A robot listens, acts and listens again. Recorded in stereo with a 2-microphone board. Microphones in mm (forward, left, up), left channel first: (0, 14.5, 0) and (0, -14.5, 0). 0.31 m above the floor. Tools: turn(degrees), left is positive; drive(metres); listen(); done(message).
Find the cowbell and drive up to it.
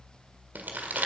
listen()
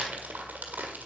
listen()
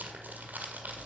done("I can't make out a cowbell to turn to.")